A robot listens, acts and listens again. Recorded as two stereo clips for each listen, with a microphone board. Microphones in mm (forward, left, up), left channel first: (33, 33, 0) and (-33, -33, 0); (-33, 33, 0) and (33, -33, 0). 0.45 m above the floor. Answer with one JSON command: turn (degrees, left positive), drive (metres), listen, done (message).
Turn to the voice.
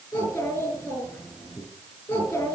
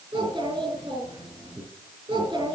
{"turn": -20}
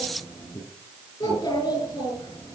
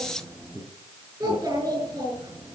{"done": "Facing the child speaking."}